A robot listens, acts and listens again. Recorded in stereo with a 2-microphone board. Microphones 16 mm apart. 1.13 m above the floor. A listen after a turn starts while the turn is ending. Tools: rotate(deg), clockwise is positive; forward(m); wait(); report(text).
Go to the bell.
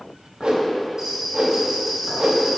rotate(40)
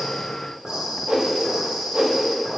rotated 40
rotate(100)
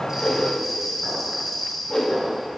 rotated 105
forward(1.0)
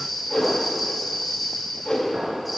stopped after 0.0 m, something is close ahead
report("Blocked. The bell is further on, straight ahead.")